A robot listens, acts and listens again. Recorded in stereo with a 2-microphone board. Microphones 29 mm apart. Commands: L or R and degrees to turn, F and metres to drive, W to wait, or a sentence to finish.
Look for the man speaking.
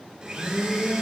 W
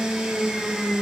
W
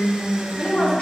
L60
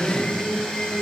W
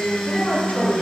L60
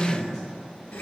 L20
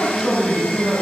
Facing the man speaking, over 4 m away.